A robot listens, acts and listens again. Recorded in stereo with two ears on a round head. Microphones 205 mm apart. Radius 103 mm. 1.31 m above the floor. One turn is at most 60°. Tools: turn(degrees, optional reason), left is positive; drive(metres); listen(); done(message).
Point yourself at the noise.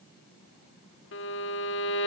turn(degrees=55, reason="The violin: about 55° left or 125° left.")
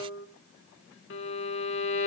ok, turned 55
turn(degrees=60, reason="So it is at 65° left.")
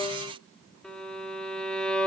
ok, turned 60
done("Facing the violin.")